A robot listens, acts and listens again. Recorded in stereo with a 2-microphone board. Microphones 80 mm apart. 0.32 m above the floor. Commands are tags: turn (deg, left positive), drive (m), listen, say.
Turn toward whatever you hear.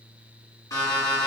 <turn deg="50"/>
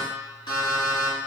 <turn deg="80"/>
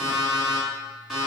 <say>Found it: an alarm clock, straight ahead, 1 to 2 m away.</say>